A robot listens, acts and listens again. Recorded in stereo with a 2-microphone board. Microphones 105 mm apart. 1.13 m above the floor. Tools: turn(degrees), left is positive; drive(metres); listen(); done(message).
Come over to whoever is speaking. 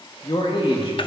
turn(degrees=60)
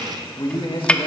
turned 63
turn(degrees=55)
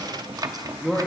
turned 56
drive(metres=1.0)
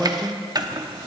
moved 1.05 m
drive(metres=1.0)
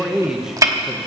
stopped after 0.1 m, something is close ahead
done("I am next to the man speaking.")